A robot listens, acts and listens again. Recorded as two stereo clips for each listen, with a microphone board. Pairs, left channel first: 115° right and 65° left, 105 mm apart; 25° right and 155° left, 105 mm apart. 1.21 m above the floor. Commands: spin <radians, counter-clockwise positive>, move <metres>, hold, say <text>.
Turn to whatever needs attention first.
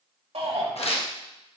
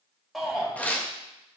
spin 1.22
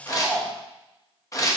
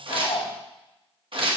say Facing the shout.